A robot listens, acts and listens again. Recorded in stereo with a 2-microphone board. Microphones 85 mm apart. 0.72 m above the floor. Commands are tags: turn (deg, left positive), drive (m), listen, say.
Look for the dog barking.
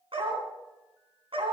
<turn deg="-90"/>
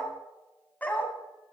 <turn deg="20"/>
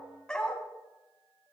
<turn deg="10"/>
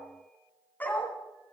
<turn deg="20"/>
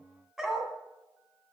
<say>Found it: a dog barking, straight ahead, 2 to 4 m away.</say>